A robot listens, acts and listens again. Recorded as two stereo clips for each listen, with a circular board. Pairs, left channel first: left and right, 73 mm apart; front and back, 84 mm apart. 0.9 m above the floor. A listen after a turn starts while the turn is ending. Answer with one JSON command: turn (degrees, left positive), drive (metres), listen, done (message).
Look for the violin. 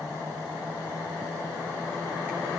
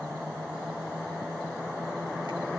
{"listen": true}
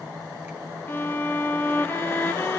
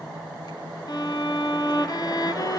{"turn": 30}
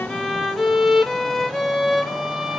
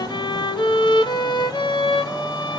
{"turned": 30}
{"done": "Facing the violin."}